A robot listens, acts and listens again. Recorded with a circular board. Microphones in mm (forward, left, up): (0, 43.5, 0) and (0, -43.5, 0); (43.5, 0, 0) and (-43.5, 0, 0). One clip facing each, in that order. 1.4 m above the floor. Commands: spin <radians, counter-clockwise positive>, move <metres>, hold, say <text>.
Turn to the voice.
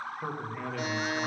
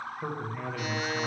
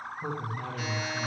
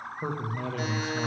spin 3.14
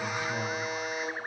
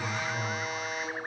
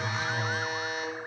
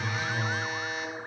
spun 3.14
spin 1.05
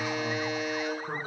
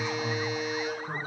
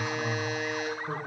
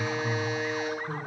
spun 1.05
hold
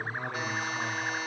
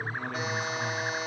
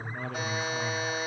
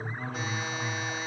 say Facing the man speaking, 1 to 2 m away.